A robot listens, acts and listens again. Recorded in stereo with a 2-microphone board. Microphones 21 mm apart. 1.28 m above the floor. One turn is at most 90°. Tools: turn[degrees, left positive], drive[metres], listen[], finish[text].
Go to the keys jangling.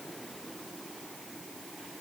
Action: listen[]
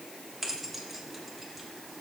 Action: turn[-30]
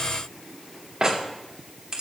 Thought: So it is at 140° right.
Action: turn[-90]
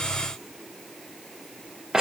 Thought: The keys jangling is now 45° right.
Action: turn[-45]
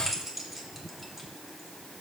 Thought: The keys jangling is now 15° right.
Action: turn[-15]
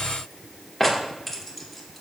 Action: drive[1.0]
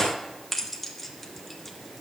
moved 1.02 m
Thought: The keys jangling is now 10° left.
Action: turn[10]
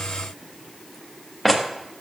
Action: drive[1.0]
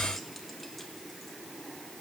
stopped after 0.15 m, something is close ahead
Action: listen[]
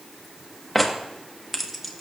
Action: finish[I am next to the keys jangling.]